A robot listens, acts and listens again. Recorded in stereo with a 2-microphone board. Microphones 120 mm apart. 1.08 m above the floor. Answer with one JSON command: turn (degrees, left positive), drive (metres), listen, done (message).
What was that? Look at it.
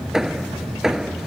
{"turn": -30}
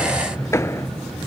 {"turn": 25}
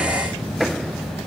{"done": "Facing the hammering."}